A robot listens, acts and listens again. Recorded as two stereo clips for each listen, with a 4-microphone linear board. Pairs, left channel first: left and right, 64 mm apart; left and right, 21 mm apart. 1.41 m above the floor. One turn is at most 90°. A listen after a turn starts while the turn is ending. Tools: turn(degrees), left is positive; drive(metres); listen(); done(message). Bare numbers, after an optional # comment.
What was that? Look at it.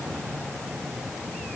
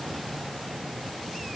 listen()
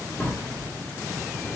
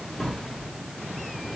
# The drawer: about 25° left or 155° left.
turn(25)
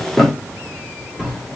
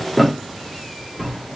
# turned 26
done("Facing the drawer.")